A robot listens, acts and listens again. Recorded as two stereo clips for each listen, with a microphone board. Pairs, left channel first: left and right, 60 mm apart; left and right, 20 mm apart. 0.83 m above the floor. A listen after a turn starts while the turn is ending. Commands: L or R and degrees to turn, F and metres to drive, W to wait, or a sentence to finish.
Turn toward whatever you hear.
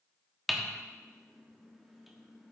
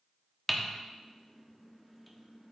L30
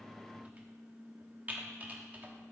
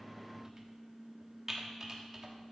R30
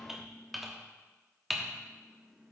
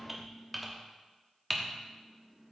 Facing the typing on a keyboard, 1 to 2 m away.